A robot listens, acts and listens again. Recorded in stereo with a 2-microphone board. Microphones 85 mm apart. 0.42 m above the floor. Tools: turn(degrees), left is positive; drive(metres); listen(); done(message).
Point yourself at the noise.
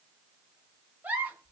turn(degrees=-20)
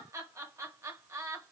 turn(degrees=-140)
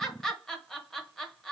done("Found it: a giggle, straight ahead, under 1 m away.")